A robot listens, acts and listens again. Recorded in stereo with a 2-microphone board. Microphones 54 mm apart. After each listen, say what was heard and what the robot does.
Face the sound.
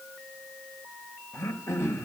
The throat clearing: about 60° left or 120° left. Turn 60° left.
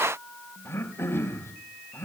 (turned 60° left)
So it is at 55° left. Turn 55° left.
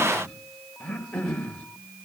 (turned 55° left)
The throat clearing is now 15° left. Turn 15° left.
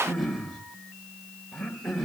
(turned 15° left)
Facing the throat clearing, 2 to 4 m away.